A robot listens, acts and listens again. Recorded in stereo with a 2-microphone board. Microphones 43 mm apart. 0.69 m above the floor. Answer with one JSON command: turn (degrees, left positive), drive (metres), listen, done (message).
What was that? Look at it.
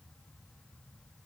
{"listen": true}
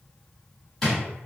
{"turn": 30}
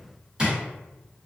{"turn": -20}
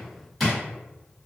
{"done": "Facing the drawer, 1 to 2 m away."}